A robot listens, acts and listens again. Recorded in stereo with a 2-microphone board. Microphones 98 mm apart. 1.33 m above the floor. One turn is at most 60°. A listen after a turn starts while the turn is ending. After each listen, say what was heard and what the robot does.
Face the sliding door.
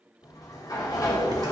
The sliding door: about 40° left or 140° left. Turn 40° left.
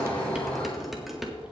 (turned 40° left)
So it is at 100° left. Turn 60° left.
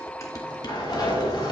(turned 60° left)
The sliding door is now 45° left. Turn 45° left.
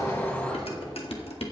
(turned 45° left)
The sliding door is now 10° left. Turn 10° left.
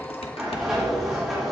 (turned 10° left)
Found it: a sliding door, straight ahead, over 4 m away.